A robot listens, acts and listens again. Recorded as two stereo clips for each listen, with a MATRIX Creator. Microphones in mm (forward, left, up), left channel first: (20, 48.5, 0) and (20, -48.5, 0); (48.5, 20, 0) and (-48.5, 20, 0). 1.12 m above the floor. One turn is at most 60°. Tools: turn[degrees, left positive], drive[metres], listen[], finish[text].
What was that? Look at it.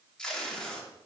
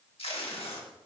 Thought: The tape being pulled: 10° left.
Action: turn[10]
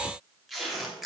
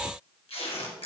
Action: finish[Facing the tape being pulled.]